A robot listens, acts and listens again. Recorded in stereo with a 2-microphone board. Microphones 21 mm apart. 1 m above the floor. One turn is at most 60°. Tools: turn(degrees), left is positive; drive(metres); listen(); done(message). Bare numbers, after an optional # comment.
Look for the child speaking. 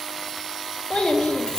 # The child speaking: about 65° left or 115° left.
turn(60)
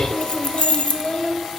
# So it is at 65° left.
turn(60)
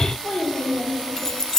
# The child speaking is now 35° left.
turn(35)
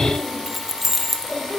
done("Facing the child speaking, 2 to 4 m away.")